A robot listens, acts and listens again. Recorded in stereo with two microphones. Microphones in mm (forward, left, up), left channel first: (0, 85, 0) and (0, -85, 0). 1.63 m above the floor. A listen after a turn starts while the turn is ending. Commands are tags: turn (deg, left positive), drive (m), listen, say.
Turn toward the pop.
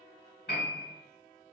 <listen/>
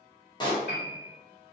<turn deg="30"/>
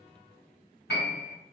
<listen/>
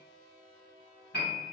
<say>I heard a pop, but can't make it out now. It was about straight ahead or 120° left.</say>